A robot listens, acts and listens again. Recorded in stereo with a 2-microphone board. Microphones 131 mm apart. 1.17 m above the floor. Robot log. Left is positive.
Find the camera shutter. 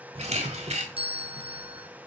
note: The camera shutter: about 60° right or 120° right.
cmd yaw -60
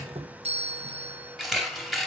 end: Found it: a camera shutter, straight ahead, 2 to 4 m away.